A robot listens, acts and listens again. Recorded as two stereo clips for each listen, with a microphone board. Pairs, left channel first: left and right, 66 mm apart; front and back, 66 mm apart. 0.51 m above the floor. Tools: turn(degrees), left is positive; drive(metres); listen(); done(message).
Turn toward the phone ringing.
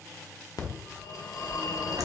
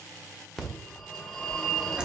turn(degrees=85)
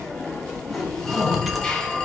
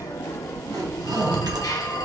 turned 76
turn(degrees=10)
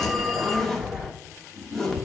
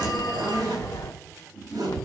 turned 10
done("Facing the phone ringing, under 1 m away.")